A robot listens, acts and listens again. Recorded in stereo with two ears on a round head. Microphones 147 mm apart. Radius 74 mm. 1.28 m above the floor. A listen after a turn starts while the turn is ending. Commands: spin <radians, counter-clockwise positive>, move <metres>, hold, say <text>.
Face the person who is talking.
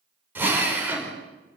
hold
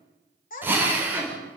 spin 0.96
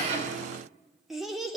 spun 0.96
say Found it: a child speaking, straight ahead.